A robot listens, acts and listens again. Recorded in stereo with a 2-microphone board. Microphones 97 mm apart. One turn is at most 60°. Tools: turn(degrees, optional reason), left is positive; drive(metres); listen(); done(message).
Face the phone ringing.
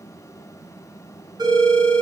turn(degrees=-45, reason="The phone ringing: about 45° right or 135° right.")
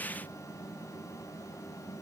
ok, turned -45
listen()
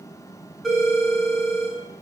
done("Facing the phone ringing, 2 to 4 m away.")